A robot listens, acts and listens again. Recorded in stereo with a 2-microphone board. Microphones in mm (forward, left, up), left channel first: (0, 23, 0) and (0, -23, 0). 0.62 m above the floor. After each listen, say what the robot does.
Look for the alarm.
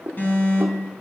Turn 50° left.
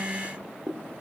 Keep listening.
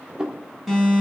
Facing the alarm, 2 to 4 m away.